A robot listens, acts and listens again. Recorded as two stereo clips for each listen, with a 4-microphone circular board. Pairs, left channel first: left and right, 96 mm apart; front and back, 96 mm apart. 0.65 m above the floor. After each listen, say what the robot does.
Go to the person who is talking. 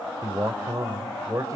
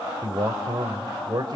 Turn 140° right.
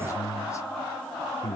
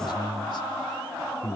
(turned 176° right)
Turn 35° left.
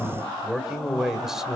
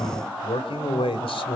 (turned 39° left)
Drive 1.0 m forward.
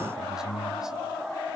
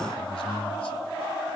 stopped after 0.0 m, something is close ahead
Blocked. The man speaking is further on, straight ahead.